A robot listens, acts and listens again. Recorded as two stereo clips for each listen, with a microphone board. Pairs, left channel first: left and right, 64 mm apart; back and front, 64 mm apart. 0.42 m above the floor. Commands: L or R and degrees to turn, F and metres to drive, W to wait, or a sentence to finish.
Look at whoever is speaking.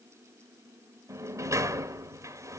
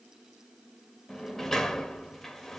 W
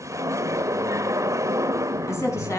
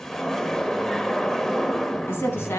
L130
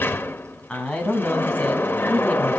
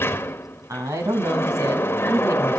L20
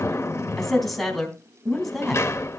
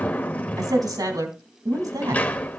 Facing the woman speaking.